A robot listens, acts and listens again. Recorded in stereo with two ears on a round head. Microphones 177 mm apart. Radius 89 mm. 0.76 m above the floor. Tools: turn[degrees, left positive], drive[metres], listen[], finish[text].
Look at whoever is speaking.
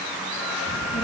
Thought: The child speaking: about 20° left or 160° left.
Action: turn[20]
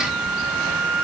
Action: finish[Found it: a child speaking, straight ahead.]